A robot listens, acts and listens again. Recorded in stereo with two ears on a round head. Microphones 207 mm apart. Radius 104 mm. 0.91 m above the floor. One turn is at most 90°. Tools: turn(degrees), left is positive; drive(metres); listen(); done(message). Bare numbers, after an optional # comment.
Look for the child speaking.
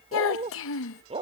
# The child speaking: about 60° left or 120° left.
turn(60)
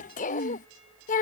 # So it is at 40° left.
turn(40)
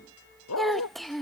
done("Found it: a child speaking, straight ahead.")